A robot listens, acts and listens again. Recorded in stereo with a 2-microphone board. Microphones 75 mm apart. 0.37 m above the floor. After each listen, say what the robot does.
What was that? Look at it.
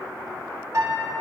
Turn 45° right.
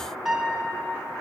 Found it: a piano, straight ahead, 1 to 2 m away.